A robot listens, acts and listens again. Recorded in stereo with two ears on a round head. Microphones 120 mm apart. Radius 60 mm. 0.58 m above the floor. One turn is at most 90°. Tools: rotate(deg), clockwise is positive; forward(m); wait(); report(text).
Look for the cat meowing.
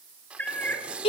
rotate(-30)
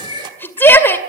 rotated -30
rotate(-90)
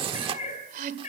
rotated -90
rotate(-45)
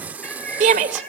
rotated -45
rotate(-10)
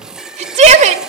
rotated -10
wait()
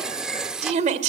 wait()
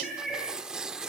report("Facing the cat meowing.")